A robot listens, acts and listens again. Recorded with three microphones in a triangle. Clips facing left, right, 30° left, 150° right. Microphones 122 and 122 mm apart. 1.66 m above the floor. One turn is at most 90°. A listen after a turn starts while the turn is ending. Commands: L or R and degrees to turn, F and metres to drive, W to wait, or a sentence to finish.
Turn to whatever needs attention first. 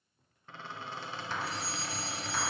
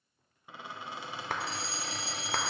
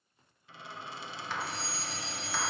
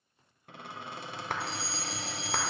L55
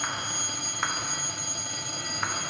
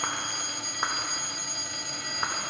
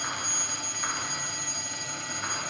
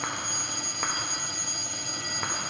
Facing the fire alarm.